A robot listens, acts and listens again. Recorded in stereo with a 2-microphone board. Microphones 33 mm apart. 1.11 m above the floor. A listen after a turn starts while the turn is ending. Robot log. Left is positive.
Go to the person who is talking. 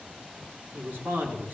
cmd yaw -90
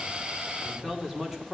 note: So it is at 10° right.
cmd yaw -10
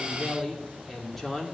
cmd fwd 1.0
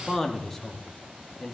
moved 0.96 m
note: The man speaking is now 10° left.
cmd yaw +10
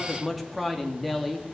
cmd fwd 1.0
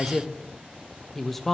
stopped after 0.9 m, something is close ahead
note: The man speaking is now 10° left.
cmd yaw +10
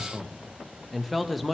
end: I am next to the man speaking.